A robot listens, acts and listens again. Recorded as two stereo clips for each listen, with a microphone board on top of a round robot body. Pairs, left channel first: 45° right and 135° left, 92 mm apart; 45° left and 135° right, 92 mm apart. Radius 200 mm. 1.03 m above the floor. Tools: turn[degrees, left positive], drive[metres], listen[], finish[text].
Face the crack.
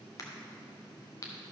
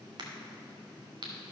Thought: The crack: 95° right.
Action: turn[-95]
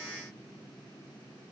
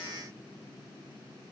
Action: finish[Facing where the crack came from. I can't hear it now.]